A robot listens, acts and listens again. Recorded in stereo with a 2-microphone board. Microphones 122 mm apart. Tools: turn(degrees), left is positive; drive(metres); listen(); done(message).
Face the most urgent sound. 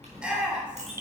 turn(degrees=-30)
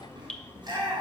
turn(degrees=-140)
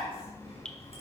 turn(degrees=25)
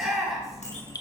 done("Found it: a shout, straight ahead, 2 to 4 m away.")